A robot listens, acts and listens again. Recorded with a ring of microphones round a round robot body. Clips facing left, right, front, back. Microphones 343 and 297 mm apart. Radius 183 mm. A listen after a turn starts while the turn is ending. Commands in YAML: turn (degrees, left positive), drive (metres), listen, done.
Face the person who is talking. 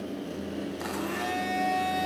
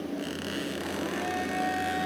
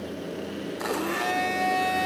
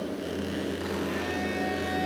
listen: true
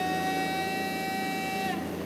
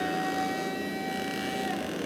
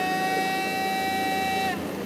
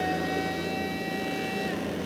listen: true
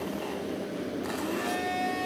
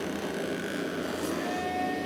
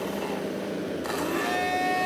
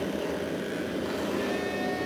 done: "I can't make out anyone speaking, only a blender."